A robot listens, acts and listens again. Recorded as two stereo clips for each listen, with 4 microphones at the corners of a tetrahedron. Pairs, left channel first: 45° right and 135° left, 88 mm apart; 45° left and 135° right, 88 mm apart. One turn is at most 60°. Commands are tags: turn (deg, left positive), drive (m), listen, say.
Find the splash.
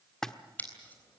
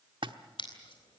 <turn deg="-60"/>
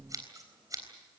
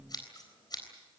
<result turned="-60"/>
<turn deg="-60"/>
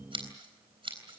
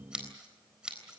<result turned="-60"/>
<turn deg="-10"/>
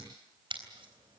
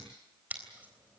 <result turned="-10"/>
<say>Facing where the splash came from. I can't hear it now.</say>